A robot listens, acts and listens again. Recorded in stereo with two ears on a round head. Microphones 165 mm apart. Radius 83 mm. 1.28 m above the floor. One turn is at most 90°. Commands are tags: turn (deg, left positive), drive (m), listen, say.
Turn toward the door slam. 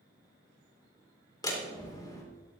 <turn deg="20"/>
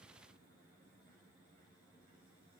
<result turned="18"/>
<listen/>
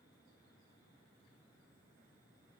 <say>I heard a door slam, but can't make it out now. It was about 5° left or 140° left.</say>